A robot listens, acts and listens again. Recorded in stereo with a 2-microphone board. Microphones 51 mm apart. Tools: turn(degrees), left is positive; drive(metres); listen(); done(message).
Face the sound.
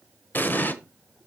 turn(degrees=40)
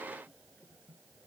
listen()
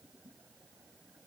done("I heard an explosion, but can't make it out now. It was about straight ahead or 100° left.")